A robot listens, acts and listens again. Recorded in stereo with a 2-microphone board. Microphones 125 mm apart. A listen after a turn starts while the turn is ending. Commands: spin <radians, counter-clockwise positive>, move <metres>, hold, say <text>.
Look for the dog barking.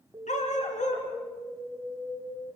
spin 1.31
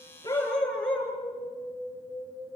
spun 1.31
say Facing the dog barking, over 4 m away.